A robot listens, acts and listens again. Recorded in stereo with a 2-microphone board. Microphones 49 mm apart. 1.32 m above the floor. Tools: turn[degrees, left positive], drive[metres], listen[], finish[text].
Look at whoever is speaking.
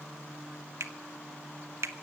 Action: listen[]
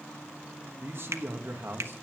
Thought: The man speaking: about 55° right or 125° right.
Action: turn[-55]
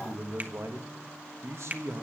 Thought: So it is at 70° right.
Action: turn[-70]
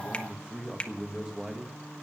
Thought: The man speaking is now 10° right.
Action: turn[-10]
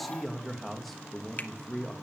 Action: finish[Found it: a man speaking, straight ahead.]